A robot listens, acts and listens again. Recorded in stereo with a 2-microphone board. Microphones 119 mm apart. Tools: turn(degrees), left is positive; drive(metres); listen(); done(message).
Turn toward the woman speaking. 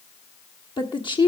turn(degrees=40)
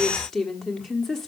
done("Found it: a woman speaking, straight ahead, 1 to 2 m away.")